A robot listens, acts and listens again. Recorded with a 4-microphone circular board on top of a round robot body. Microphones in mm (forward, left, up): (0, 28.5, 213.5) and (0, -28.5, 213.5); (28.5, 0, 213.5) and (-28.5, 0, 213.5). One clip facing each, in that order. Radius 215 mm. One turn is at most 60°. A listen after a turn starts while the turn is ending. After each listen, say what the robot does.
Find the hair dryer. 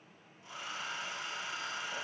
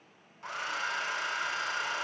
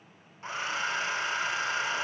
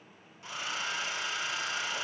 Turn 60° right.
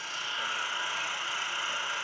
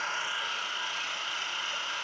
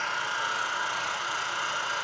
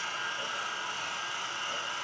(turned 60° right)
Turn 10° left.
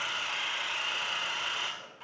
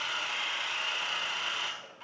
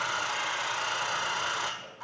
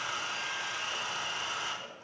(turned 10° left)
Facing the hair dryer.